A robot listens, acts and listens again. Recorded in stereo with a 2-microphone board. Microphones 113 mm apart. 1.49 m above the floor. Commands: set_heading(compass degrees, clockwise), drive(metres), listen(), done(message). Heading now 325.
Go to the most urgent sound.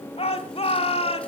set_heading(265)
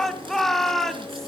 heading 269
drive(1.0)
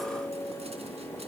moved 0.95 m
listen()
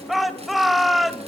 drive(1.0)
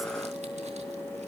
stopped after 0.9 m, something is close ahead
listen()
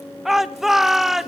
done("Arrived at the shout, straight ahead.")